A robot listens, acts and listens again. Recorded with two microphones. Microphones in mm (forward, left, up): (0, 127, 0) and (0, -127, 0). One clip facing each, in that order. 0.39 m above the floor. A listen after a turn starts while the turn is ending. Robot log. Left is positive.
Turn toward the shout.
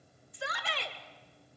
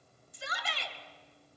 note: The shout: about 55° left or 125° left.
cmd yaw +55
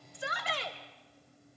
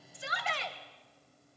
note: So it is at 45° left.
cmd yaw +45
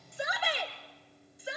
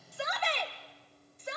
note: The shout is now 10° left.
cmd yaw +10
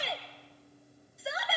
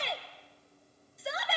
end: Facing the shout.